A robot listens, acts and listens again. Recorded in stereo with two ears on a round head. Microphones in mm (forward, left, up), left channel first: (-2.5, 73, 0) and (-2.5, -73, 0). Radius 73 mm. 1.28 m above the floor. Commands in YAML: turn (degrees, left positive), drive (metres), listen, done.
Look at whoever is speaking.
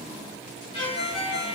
listen: true
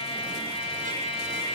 listen: true
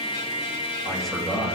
turn: 30
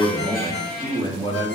turn: 150
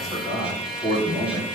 turn: 25
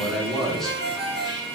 done: "Facing the man speaking, over 4 m away."